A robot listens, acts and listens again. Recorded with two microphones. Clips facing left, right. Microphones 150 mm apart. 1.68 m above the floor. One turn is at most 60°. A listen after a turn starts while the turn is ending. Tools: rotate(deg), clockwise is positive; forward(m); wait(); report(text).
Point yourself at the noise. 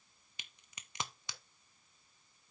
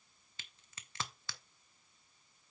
rotate(-15)
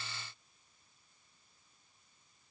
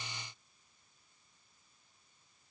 wait()
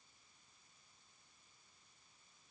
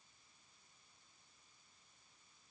report("I heard a crack, but can't make it out now. It was about straight ahead or 150° left.")